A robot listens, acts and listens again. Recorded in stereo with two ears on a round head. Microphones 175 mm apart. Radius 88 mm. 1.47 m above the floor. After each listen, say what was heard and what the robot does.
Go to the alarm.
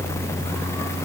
Keep listening.
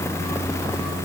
Keep listening.
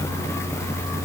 I can't make out an alarm to turn to.